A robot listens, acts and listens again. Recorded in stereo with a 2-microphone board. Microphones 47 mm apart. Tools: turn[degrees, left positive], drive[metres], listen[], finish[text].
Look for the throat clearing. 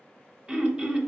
Thought: The throat clearing: about 20° right or 160° right.
Action: turn[-20]
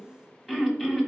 Action: finish[Facing the throat clearing, under 1 m away.]